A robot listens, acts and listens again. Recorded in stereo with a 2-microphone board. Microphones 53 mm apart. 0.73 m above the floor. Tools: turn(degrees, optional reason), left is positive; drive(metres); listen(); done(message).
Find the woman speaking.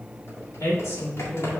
turn(degrees=60, reason="The woman speaking: about 60° left or 120° left.")
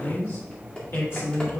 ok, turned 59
turn(degrees=55, reason="So it is at 55° left.")
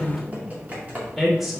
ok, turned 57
done("Found it: a woman speaking, straight ahead.")